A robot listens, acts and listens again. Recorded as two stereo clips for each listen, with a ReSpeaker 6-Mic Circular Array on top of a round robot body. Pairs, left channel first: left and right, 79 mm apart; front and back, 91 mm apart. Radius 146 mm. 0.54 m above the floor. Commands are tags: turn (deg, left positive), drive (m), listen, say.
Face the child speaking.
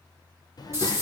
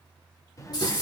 <turn deg="55"/>
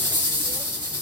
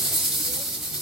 <listen/>
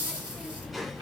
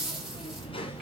<say>Facing the child speaking, 1 to 2 m away.</say>